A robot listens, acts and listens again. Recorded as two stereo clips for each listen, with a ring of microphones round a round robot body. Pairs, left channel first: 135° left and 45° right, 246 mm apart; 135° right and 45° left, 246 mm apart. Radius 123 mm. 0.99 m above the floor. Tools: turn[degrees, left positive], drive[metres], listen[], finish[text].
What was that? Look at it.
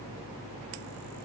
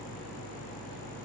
Action: listen[]
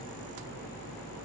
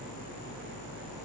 Action: listen[]
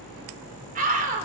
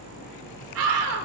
Thought: The scream: 15° left.
Action: turn[15]
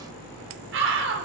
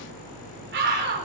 Action: finish[Found it: a scream, straight ahead, over 4 m away.]